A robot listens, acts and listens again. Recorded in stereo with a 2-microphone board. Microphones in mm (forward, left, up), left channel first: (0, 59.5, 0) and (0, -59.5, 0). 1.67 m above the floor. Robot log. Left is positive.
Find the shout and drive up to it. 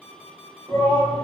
note: The shout: about 35° left or 145° left.
cmd yaw +35
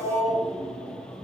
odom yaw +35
note: So it is at 110° left.
cmd yaw +110
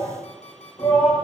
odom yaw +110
note: The shout is now 45° left.
cmd yaw +45
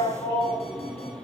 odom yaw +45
note: The shout is now 15° left.
cmd yaw +15
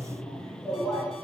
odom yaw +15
cmd fwd 1.0
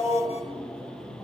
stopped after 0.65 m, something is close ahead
end: Blocked. The shout is further on, straight ahead.